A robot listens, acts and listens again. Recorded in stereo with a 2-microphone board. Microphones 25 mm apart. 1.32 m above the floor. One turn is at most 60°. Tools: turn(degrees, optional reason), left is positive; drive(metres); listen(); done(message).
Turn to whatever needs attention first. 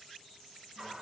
listen()
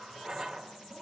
listen()
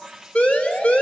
turn(degrees=60, reason="The siren: about 60° left or 120° left.")
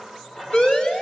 turn(degrees=55, reason="So it is at 55° left.")
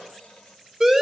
turn(degrees=-10, reason="The siren is now 10° right.")
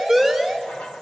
done("Facing the siren.")